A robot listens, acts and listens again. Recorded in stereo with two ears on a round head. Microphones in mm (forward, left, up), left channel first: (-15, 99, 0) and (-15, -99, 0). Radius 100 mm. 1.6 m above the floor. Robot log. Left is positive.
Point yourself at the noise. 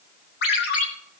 note: The ringtone: about 50° left or 130° left.
cmd yaw +50
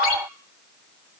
note: So it is at 80° left.
cmd yaw +80
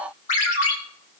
note: The ringtone is now 35° left.
cmd yaw +35
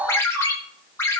note: The ringtone is now 10° left.
cmd yaw +10
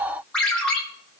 end: Facing the ringtone, 2 to 4 m away.